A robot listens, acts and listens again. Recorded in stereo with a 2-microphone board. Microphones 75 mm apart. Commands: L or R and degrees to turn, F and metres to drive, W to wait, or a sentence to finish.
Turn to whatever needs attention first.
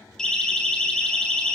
L30
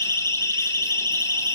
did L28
L145
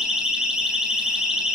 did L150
Facing the siren, over 4 m away.